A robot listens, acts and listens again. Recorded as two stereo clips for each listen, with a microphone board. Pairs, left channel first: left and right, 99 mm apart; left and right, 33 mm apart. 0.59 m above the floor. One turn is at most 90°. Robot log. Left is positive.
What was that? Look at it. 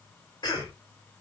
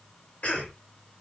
note: The cough: about 45° left or 135° left.
cmd yaw +45
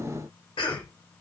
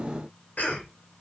note: So it is at 85° left.
cmd yaw +85
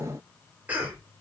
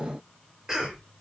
note: The cough is now 15° right.
cmd yaw -15
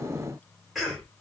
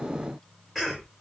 end: Facing the cough, 1 to 2 m away.